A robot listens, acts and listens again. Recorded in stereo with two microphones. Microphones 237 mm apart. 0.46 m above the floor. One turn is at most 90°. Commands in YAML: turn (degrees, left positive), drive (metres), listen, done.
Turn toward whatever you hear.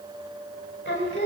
turn: 50
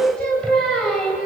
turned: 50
done: "Found it: singing, straight ahead."